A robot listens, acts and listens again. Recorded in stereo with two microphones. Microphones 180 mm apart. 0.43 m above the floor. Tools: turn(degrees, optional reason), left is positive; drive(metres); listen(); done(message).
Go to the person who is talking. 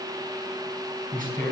turn(degrees=-50, reason="The man speaking: about 50° right or 130° right.")
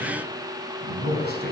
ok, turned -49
turn(degrees=-75, reason="So it is at 75° right.")
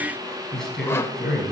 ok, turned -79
drive(metres=1.0)
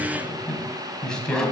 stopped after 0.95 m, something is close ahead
done("Blocked. The man speaking is further on, straight ahead.")